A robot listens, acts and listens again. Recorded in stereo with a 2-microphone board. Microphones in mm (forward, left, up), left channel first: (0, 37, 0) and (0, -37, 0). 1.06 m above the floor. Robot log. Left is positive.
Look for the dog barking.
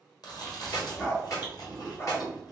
note: The dog barking: about 35° left or 145° left.
cmd yaw +35
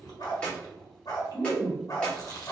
note: The dog barking: about 45° left or 135° left.
cmd yaw +45
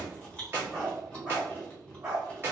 note: So it is at 15° right.
cmd yaw -15
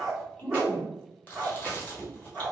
end: Facing the dog barking.